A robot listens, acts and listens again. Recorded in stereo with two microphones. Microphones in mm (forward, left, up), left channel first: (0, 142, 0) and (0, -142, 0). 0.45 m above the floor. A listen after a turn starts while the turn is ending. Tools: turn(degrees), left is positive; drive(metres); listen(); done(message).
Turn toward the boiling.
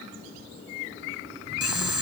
turn(degrees=-90)
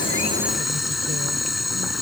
done("Facing the boiling.")